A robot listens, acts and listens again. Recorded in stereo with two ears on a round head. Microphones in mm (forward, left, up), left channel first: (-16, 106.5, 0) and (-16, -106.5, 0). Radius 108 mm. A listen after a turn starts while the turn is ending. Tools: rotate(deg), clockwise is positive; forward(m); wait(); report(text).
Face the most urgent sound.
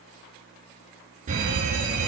rotate(35)
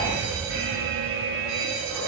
rotate(105)
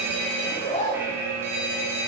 rotate(10)
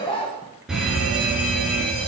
report("Found it: a fire alarm, straight ahead, 2 to 4 m away.")